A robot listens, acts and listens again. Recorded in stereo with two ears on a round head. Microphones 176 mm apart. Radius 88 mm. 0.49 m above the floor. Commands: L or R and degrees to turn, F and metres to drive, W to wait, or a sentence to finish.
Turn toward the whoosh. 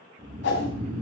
L65
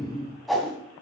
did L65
Found it: a whoosh, straight ahead.